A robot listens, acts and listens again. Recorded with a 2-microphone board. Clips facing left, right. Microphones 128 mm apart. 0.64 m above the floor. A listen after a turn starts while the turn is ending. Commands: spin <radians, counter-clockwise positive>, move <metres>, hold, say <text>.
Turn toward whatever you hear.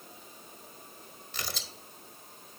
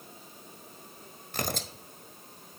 spin -0.87
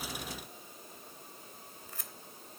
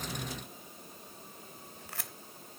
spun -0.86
spin -1.40
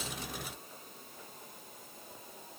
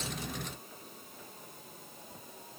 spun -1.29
hold
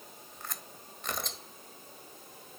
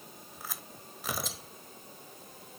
say Found it: tearing paper, straight ahead, under 1 m away.